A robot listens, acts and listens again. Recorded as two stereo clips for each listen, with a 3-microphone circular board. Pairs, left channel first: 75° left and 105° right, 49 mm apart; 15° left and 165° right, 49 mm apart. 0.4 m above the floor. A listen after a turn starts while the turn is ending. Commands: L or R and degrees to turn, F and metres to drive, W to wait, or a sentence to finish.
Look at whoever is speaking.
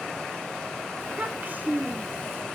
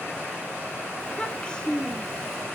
R60
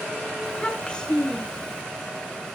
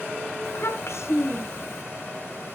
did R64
Facing the child speaking.